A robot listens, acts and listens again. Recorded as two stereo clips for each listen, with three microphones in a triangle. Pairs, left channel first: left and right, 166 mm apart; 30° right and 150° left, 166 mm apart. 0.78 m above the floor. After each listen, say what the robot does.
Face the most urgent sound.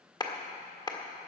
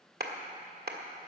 Keep listening.
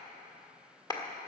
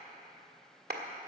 Keep listening.
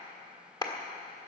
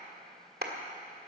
I can't make out anything urgent, only a clap.